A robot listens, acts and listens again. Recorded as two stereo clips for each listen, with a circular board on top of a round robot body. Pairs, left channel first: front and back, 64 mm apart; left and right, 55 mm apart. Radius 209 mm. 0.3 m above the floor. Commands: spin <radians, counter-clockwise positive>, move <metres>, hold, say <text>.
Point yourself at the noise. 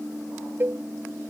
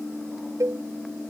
spin -2.09
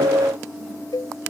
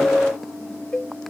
spin 0.26
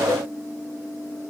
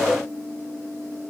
hold
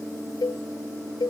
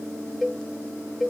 say Facing the cowbell.